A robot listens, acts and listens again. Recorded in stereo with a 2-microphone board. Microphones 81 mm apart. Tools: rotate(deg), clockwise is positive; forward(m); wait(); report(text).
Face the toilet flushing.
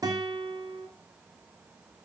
wait()
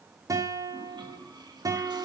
rotate(70)
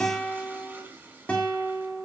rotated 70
rotate(25)
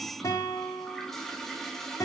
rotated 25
report("Found it: a toilet flushing, straight ahead.")